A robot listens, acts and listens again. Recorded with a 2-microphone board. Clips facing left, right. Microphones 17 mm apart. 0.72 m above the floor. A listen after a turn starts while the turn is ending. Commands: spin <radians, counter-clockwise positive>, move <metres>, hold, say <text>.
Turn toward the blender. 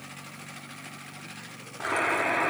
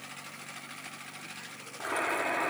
spin 0.52
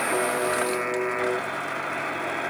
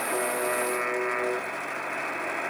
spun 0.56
hold
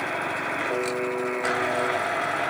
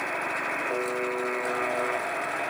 hold
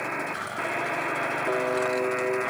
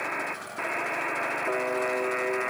spin 2.09
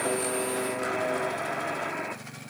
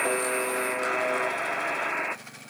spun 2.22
spin -0.17
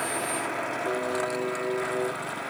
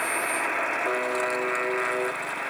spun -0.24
hold
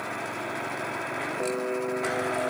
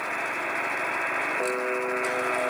hold
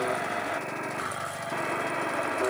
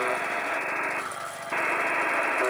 say Facing the blender, under 1 m away.